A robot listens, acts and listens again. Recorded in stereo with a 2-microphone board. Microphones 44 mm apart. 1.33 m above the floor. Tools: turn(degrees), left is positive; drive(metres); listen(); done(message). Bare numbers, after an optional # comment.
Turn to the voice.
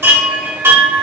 listen()
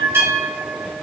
listen()
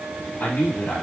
# The man speaking: about 50° left or 130° left.
turn(50)
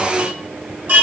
listen()
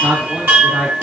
done("Found it: a man speaking, straight ahead.")